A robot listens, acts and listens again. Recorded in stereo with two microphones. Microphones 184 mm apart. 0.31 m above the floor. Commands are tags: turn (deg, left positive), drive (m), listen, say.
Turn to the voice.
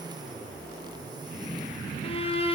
<listen/>
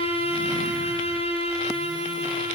<listen/>
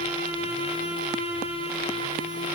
<say>I can't make out anyone speaking to turn to.</say>